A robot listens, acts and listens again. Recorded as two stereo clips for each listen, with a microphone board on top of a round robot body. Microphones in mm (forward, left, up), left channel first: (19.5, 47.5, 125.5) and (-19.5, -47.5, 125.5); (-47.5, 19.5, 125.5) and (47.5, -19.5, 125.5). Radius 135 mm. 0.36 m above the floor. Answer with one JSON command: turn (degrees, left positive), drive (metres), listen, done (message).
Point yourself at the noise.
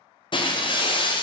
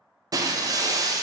{"turn": 30}
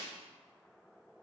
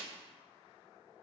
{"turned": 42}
{"turn": -10}
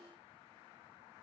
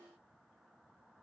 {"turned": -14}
{"done": "I heard breaking glass from this way, but can't make it out now."}